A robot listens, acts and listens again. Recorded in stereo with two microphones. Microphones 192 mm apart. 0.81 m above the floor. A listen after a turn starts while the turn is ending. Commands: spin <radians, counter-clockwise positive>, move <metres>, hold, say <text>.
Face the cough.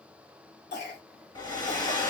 spin 1.05
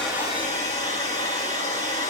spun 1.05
hold
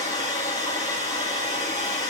hold
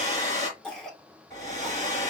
say Found it: a cough, straight ahead, 2 to 4 m away.